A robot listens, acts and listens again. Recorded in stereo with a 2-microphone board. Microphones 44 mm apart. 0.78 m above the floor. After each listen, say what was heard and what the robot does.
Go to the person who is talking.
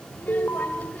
The child speaking: about 40° left or 140° left. Turn 40° left.
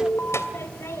So it is at 100° left. Turn 100° left.
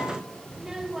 The child speaking is now 10° right. Turn 10° right.
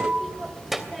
Drive 1.0 m forward.
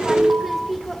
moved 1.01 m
Drive 1.0 m forward.
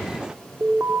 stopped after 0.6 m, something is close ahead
Keep listening.
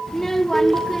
The child speaking is now 10° left. Turn 10° left.
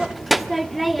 Arrived at the child speaking, straight ahead.